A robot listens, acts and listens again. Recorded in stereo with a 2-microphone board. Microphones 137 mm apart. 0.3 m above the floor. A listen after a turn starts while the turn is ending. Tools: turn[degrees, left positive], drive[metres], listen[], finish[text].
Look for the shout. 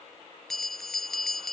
Action: listen[]
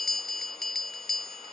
Action: listen[]
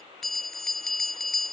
Action: finish[I can't make out a shout to turn to.]